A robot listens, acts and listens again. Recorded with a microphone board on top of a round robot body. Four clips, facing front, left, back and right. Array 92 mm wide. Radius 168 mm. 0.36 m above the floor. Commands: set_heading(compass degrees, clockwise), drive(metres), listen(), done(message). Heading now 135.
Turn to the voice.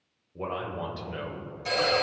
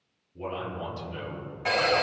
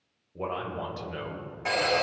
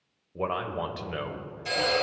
set_heading(230)
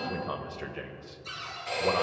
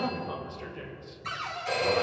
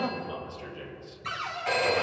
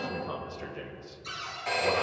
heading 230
set_heading(240)
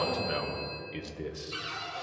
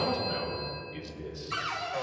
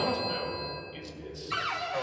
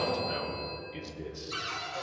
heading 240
done("Found it: a man speaking, straight ahead, 1 to 2 m away.")